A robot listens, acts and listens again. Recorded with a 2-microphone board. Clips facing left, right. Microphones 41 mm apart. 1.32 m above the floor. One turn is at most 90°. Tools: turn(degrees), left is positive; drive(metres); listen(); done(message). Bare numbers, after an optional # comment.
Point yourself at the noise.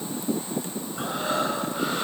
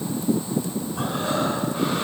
# The breathing: about 55° right or 125° right.
turn(-55)
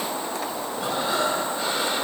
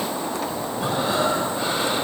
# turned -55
done("Found it: breathing, straight ahead, over 4 m away.")